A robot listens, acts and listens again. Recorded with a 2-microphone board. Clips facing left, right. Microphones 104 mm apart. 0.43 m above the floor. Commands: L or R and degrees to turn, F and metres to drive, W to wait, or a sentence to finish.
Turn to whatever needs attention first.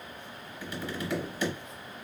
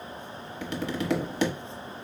W
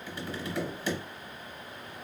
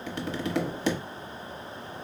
W
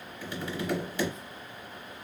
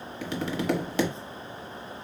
I can't make out anything urgent to turn to.